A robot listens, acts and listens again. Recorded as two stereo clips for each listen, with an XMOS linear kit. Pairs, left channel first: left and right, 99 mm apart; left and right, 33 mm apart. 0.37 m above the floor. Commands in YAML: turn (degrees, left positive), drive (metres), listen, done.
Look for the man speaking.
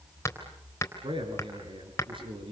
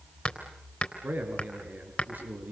turn: -60
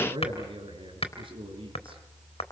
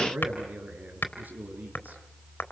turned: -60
turn: -60
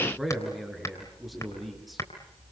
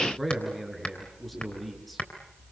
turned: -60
done: "Found it: a man speaking, straight ahead."